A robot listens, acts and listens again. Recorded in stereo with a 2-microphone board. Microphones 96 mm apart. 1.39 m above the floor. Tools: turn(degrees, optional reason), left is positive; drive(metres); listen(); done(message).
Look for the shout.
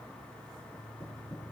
listen()
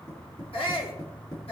turn(degrees=90)
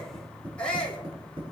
turn(degrees=10, reason="So it is at 10° left.")
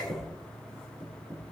listen()
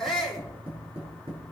done("Found it: a shout, straight ahead.")